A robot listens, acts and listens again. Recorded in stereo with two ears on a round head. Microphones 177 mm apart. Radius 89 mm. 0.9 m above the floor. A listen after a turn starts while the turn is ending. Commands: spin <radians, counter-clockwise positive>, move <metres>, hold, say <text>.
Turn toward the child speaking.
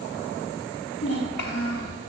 spin 0.96
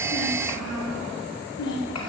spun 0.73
spin 1.40
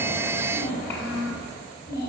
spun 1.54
spin 0.26
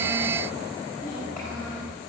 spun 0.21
say Facing the child speaking.